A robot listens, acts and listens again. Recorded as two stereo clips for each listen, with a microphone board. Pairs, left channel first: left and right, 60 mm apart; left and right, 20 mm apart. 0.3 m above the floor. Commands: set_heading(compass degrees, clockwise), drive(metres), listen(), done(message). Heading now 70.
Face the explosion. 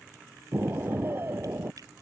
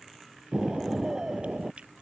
set_heading(110)
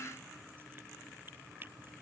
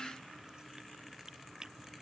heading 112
listen()
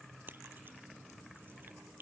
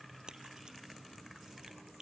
done("I heard an explosion, but can't make it out now. It was about straight ahead or 100° right.")